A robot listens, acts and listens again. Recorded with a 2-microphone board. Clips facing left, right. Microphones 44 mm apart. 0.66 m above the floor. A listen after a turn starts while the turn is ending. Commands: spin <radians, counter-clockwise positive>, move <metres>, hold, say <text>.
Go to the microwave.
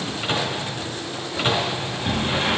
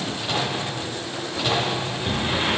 spin 0.61
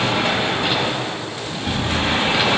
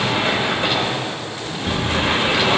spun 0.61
hold
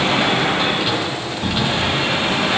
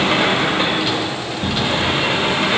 hold
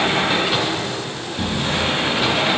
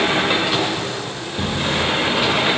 say I heard a microwave, but can't make it out now. It was about straight ahead or 110° left. I did not reach it.